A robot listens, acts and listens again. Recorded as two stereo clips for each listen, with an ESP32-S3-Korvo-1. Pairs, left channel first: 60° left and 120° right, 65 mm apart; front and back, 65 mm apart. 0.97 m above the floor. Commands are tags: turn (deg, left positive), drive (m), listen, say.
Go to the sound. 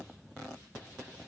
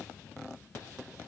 <listen/>
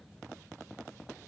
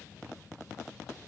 <listen/>
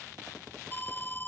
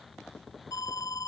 <drive m="1.0"/>
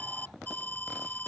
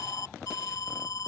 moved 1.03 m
<drive m="1.0"/>
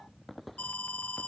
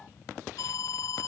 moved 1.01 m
<drive m="1.0"/>
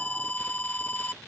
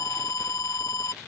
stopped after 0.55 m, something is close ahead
<say>Arrived at the alarm, straight ahead.</say>